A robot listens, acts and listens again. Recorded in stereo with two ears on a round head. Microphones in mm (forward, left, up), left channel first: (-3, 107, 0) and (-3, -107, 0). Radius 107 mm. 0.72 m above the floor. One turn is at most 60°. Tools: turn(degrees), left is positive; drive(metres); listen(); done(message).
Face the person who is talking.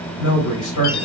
turn(degrees=60)
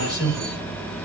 turn(degrees=55)
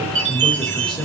done("Facing the man speaking, 2 to 4 m away.")